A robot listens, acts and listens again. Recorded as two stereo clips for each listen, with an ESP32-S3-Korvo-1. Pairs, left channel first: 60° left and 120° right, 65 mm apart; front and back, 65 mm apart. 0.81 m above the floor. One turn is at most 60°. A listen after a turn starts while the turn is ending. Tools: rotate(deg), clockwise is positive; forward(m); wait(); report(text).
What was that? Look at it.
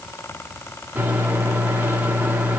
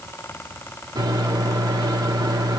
rotate(-60)
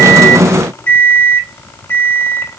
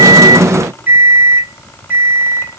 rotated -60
rotate(-60)
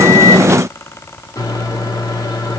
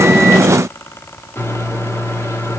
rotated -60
rotate(-45)
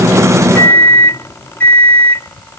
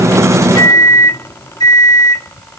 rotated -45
report("Facing the microwave, 1 to 2 m away.")